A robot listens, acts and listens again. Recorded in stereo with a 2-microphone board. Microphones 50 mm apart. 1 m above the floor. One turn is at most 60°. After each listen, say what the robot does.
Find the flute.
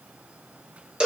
Keep listening.
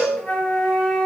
Turn 20° left.
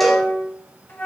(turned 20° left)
Turn 60° left.
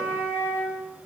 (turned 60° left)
Turn 60° left.
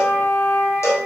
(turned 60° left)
Turn 50° left.
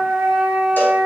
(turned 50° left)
Facing the flute, 1 to 2 m away.